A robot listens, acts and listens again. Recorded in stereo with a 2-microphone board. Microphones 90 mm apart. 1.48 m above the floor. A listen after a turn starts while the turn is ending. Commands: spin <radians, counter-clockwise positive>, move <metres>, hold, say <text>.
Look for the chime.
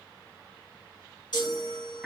spin 0.87
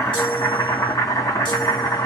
hold
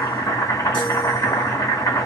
hold
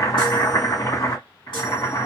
say I heard a chime, but can't make it out now. It was about straight ahead or 80° left.